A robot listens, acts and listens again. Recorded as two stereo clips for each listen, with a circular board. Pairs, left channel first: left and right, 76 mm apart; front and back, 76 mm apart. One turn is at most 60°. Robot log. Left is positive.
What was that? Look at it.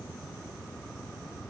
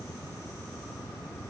cmd idle
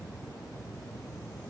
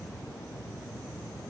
cmd idle
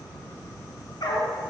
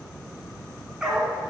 note: The dog barking: 100° left.
cmd yaw +60
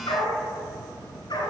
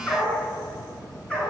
note: The dog barking is now 75° left.
cmd yaw +60
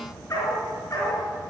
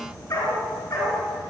note: The dog barking is now 35° left.
cmd yaw +35
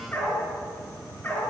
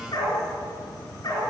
note: The dog barking is now 20° left.
cmd yaw +20
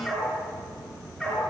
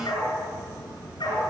end: Found it: a dog barking, straight ahead, 2 to 4 m away.